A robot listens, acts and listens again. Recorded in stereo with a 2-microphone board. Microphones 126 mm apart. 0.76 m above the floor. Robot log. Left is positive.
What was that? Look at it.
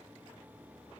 cmd idle
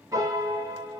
note: The piano: about 30° right or 150° right.
cmd yaw -30
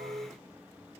note: So it is at 115° right.
cmd yaw -115
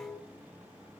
end: Found it: a piano, straight ahead.